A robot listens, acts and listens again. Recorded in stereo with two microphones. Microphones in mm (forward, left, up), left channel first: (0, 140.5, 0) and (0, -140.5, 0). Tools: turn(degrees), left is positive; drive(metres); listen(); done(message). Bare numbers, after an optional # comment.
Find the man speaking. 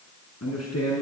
# The man speaking: about 65° left or 115° left.
turn(65)
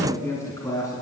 # So it is at 10° left.
turn(10)
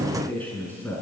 done("Facing the man speaking, over 4 m away.")